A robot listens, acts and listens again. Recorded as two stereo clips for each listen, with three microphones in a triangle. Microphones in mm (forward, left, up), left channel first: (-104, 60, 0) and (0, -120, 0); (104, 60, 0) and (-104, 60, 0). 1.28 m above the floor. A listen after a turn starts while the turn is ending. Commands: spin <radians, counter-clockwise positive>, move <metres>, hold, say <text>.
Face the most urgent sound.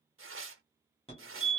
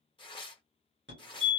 spin 3.14
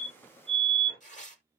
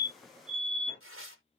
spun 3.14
spin 1.05
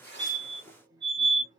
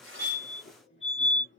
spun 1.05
say Facing the fire alarm, 1 to 2 m away.